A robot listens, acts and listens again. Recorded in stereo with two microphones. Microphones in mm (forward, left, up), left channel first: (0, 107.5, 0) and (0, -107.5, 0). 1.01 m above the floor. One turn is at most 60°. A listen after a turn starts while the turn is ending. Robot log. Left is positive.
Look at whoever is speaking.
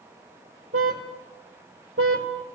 cmd idle
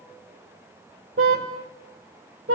cmd idle
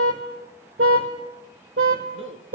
note: The man speaking: about 65° right or 115° right.
cmd yaw -60
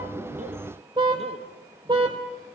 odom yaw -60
cmd idle
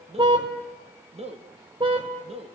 note: So it is at 30° right.
cmd yaw -30
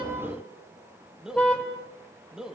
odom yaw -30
end: Found it: a man speaking, straight ahead, 1 to 2 m away.